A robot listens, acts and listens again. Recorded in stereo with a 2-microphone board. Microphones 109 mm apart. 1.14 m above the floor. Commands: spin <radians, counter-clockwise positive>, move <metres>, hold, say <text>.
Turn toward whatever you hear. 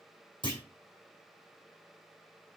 spin 0.70
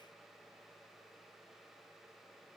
hold
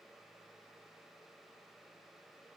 say I heard a clunk, but can't make it out now. It was about straight ahead or 100° left.